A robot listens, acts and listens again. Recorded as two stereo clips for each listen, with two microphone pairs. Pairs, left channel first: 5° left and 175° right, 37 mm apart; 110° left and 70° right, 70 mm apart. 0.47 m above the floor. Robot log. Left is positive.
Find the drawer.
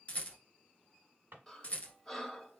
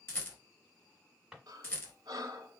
note: The drawer: 150° right.
cmd yaw -150
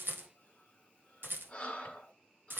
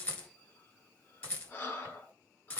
cmd idle
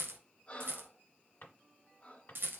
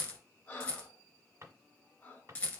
note: The drawer is now 25° right.
cmd yaw -25
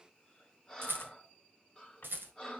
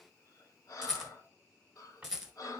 cmd idle
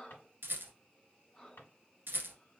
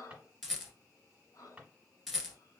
end: Facing the drawer, 1 to 2 m away.